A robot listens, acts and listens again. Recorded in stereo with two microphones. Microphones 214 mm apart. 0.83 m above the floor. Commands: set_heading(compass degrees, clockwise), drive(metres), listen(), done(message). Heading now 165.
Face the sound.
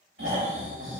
set_heading(230)
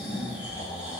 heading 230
done("Found it: snoring, straight ahead.")